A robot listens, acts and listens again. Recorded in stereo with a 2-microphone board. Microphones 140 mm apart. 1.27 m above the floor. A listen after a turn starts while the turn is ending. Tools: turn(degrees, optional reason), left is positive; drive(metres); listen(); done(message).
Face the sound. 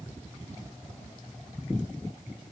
listen()
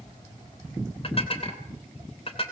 turn(degrees=45, reason="The dishes clattering: about 45° left or 135° left.")
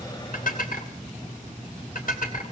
turn(degrees=90, reason="So it is at 90° left.")
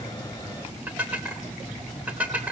turn(degrees=-10, reason="The dishes clattering is now 10° right.")
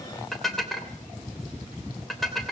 done("Facing the dishes clattering.")